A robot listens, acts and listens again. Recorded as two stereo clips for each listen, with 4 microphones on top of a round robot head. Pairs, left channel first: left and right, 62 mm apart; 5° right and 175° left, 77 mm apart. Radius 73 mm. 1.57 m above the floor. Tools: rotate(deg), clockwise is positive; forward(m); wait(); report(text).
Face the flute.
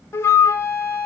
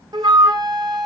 rotate(-140)
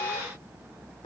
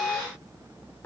rotate(-60)
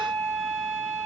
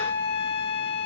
rotate(10)
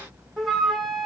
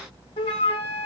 report("Found it: a flute, straight ahead, 1 to 2 m away.")